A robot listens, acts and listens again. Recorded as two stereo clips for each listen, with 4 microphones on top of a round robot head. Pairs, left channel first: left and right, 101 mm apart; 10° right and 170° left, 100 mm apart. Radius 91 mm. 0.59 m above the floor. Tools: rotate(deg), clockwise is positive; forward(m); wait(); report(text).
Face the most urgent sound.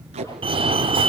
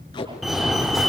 rotate(100)
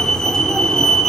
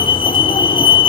report("Facing the fire alarm.")